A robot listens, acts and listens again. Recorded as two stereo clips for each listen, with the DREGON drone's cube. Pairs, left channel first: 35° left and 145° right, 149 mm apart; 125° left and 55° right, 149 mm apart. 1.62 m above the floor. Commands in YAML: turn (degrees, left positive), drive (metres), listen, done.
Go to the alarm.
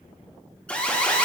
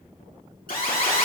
turn: 115
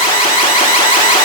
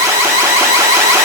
turn: 10
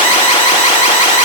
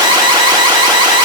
drive: 1.0
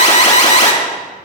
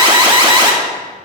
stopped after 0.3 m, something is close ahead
done: "Something is in my way. I am facing the alarm but have not reached it."